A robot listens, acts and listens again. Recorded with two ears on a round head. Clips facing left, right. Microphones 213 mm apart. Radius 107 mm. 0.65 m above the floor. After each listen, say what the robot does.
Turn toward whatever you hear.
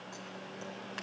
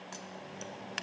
Turn 40° right.
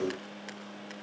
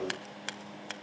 Turn 100° right.
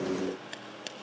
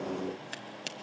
Found it: scissors, straight ahead.